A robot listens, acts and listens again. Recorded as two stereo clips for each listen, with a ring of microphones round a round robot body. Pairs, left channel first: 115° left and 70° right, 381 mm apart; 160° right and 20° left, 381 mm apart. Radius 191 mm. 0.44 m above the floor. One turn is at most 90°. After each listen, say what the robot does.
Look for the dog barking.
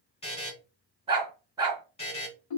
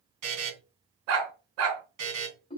Turn 15° left.
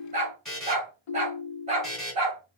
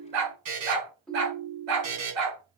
Facing the dog barking, 2 to 4 m away.